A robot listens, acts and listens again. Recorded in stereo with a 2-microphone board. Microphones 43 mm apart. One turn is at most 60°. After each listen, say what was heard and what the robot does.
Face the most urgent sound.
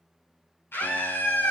The scream: about 65° left or 115° left. Turn 60° left.
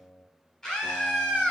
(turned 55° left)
So it is at 15° left. Turn 15° left.
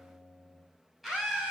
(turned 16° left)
Found it: a scream, straight ahead.